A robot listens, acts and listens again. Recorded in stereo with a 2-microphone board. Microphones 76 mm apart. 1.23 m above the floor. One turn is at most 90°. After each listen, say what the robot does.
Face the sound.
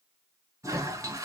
Turn 50° right.
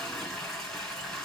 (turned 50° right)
Facing the toilet flushing, 2 to 4 m away.